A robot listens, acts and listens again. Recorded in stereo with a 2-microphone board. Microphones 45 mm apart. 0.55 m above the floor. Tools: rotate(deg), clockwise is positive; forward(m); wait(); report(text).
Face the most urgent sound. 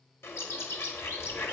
wait()
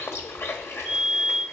rotate(-30)
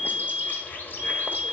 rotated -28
rotate(-115)
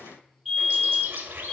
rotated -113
report("Facing the fire alarm, 2 to 4 m away.")